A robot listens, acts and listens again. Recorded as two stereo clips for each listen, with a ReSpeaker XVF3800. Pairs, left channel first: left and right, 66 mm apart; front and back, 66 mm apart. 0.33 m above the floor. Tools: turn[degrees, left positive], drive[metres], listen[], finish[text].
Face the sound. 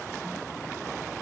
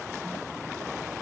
Action: listen[]
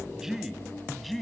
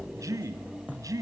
Thought: The man speaking: 175° left.
Action: turn[175]
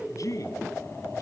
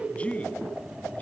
Thought: The man speaking is now 70° left.
Action: turn[70]
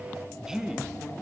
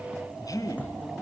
Thought: The man speaking is now 10° right.
Action: turn[-10]
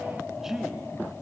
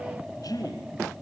Thought: The man speaking is now 10° right.
Action: turn[-10]
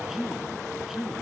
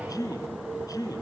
Action: finish[Found it: a man speaking, straight ahead, 2 to 4 m away.]